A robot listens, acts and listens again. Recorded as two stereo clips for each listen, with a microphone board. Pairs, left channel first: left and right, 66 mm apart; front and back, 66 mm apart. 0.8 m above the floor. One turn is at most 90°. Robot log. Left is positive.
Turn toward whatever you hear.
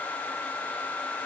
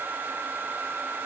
cmd idle
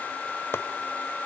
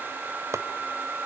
note: The chopping: 140° left.
cmd yaw +90
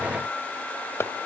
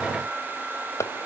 note: The chopping is now 40° left.
cmd yaw +40
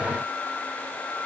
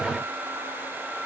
cmd idle
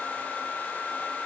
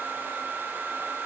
cmd idle
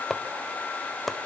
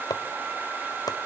end: Found it: chopping, straight ahead, 1 to 2 m away.